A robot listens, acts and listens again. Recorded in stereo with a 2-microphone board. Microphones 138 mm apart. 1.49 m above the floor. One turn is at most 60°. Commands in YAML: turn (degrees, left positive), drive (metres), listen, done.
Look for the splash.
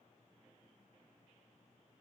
listen: true
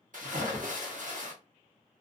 turn: -60
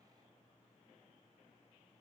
listen: true
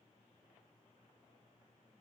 done: "I heard a splash, but can't make it out now. It was about 10° right or 50° right."